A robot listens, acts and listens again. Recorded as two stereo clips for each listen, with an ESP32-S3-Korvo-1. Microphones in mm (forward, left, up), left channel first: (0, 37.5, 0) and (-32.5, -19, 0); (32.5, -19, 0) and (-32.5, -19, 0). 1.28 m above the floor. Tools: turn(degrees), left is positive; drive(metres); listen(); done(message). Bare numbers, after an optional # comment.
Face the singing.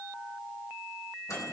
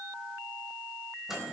listen()
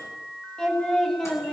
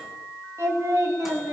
# The singing: 140° left.
turn(140)
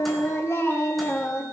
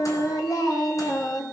# The singing is now 10° left.
turn(10)
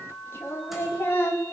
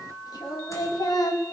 done("Found it: singing, straight ahead.")